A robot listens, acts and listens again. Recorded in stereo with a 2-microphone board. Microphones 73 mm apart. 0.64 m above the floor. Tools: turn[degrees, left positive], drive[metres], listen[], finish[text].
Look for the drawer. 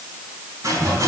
Action: listen[]
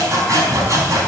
Action: listen[]
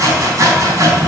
Action: finish[I can't make out a drawer to turn to.]